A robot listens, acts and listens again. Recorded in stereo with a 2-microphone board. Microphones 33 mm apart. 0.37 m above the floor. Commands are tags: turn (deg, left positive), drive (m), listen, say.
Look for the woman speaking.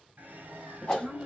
<turn deg="-30"/>
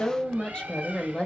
<turn deg="30"/>
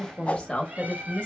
<turn deg="35"/>
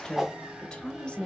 <turn deg="20"/>
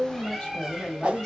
<say>Facing the woman speaking, 1 to 2 m away.</say>